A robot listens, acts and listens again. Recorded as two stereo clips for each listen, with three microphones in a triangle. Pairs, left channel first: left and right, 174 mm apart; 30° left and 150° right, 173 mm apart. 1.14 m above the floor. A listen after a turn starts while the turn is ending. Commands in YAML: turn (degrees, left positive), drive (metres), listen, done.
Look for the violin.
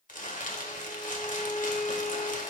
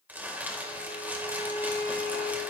turn: 45
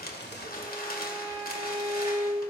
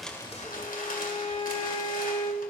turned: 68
turn: -20
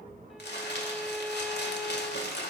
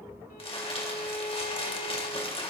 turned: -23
done: "Found it: a violin, straight ahead, 1 to 2 m away."